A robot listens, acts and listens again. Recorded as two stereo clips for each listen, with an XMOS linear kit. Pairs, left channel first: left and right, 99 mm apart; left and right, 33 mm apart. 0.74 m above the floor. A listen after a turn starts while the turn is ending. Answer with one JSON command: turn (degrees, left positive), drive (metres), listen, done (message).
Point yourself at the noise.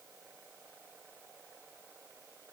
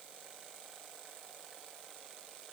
{"listen": true}
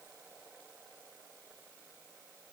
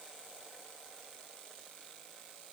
{"listen": true}
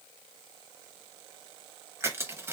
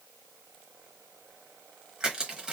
{"turn": -25}
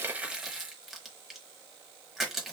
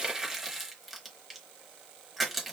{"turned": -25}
{"done": "Found it: crushing, straight ahead."}